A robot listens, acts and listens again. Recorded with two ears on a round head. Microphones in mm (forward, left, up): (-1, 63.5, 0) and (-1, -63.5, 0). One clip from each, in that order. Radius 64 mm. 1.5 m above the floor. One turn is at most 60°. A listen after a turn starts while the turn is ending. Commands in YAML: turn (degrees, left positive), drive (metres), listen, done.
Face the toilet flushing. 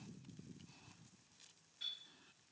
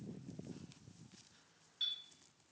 listen: true
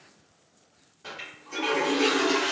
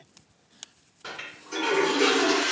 turn: -15
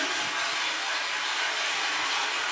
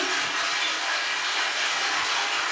turn: -60
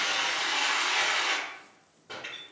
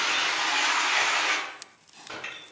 turn: -60
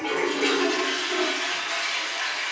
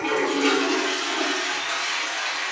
turn: -25
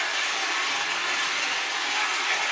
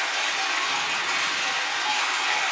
done: "Facing the toilet flushing, 1 to 2 m away."